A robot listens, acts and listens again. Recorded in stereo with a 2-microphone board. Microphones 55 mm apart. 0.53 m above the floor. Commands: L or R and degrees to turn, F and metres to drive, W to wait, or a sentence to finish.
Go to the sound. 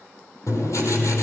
L90
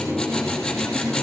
F1.0
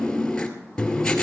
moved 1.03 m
L10
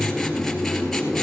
F1.0
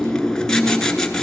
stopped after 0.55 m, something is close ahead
L10
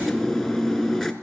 I am next to the writing.